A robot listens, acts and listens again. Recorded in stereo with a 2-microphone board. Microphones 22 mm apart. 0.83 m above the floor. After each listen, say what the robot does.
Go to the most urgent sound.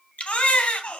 Turn 70° left.
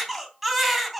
Drive 1.0 m forward.
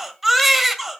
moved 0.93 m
Drive 1.0 m forward.
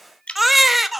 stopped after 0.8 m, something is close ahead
I am next to the baby crying.